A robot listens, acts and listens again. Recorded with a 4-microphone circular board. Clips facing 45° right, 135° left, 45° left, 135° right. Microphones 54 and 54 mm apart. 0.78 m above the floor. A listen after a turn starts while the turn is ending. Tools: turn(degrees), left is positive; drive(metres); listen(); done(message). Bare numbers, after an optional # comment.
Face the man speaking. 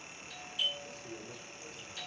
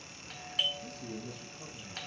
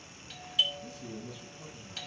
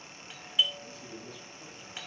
# The man speaking: 125° left.
turn(125)
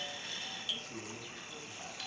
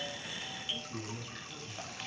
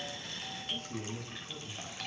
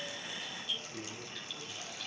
# The man speaking is now 45° left.
turn(45)
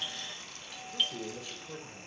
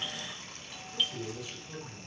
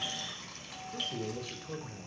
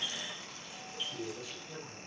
# The man speaking is now 15° left.
turn(15)
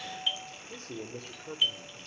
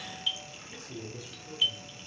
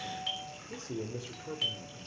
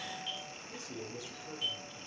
done("Found it: a man speaking, straight ahead, 2 to 4 m away.")